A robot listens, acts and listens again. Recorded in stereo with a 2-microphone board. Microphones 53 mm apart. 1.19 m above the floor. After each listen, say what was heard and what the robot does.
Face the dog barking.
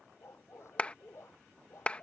The dog barking: about 60° left or 120° left. Turn 60° left.
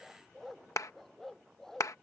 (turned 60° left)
Found it: a dog barking, straight ahead.